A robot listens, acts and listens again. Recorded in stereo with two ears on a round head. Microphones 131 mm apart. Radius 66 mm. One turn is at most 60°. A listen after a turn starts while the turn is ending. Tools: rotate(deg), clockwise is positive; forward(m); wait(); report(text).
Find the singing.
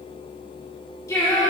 rotate(-25)
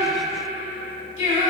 rotate(-60)
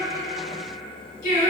rotate(-60)
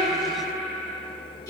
rotate(-25)
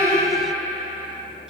report("Found it: singing, straight ahead.")